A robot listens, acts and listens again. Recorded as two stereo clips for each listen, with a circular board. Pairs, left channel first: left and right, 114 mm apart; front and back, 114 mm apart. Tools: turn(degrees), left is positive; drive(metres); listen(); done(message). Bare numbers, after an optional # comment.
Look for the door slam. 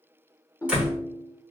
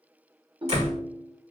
# The door slam: 170° right.
turn(-170)
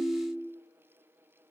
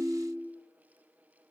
done("I heard a door slam from this way, but can't make it out now.")